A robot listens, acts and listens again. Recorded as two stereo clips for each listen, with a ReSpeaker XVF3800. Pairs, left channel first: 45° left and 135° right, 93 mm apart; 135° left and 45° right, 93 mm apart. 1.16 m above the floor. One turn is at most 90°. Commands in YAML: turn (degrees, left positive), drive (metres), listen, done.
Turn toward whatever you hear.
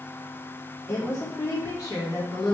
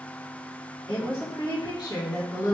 turn: 85
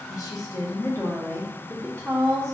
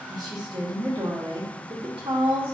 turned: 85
turn: -40
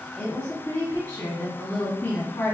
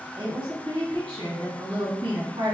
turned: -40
turn: -10
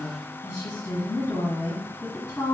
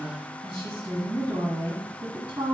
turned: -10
done: "Facing the woman speaking."